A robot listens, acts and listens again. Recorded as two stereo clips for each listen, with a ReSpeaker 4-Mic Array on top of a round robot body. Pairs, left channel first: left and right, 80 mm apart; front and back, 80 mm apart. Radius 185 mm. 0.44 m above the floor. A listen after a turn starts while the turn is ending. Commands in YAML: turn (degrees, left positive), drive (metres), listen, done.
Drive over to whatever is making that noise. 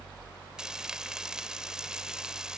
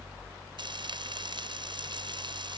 turn: -170
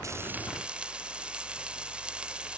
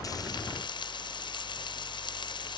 turn: -10
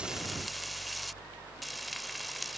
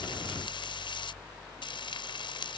drive: 1.0
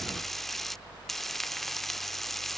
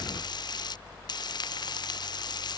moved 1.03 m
drive: 1.0
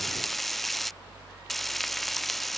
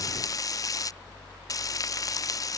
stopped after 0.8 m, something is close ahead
done: "I am next to the frying."